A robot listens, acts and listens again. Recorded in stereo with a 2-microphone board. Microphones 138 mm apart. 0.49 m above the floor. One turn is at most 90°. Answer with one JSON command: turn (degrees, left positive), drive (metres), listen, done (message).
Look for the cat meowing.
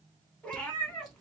{"turn": 30}
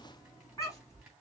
{"turn": 90}
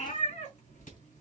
{"turn": 60}
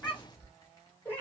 {"turn": 15}
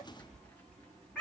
{"done": "Found it: a cat meowing, straight ahead."}